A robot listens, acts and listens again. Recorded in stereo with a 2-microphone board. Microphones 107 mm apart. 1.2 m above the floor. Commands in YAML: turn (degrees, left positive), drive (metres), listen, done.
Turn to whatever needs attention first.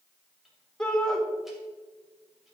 turn: 30
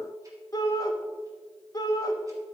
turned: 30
turn: 145
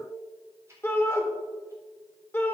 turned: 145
turn: 20
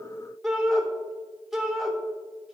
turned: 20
done: "Found it: a shout, straight ahead, 1 to 2 m away."